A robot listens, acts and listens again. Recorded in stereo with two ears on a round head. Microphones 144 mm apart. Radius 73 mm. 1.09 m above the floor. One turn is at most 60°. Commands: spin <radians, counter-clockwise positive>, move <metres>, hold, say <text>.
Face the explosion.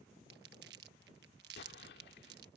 spin 1.05
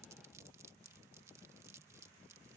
hold
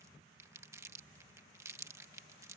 say I heard an explosion, but can't make it out now. It was about 5° left or 55° left.